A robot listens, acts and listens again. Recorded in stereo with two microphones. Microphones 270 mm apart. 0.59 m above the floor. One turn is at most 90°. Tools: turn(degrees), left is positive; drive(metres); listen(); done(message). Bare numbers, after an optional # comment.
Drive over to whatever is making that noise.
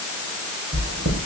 # The chewing: about 70° right or 110° right.
turn(-70)
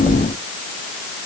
drive(1.0)
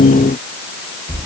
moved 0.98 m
# The chewing is now 10° right.
turn(-10)
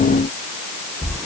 drive(1.0)
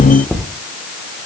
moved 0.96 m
drive(1.0)
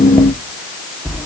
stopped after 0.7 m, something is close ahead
done("Arrived at the chewing, straight ahead.")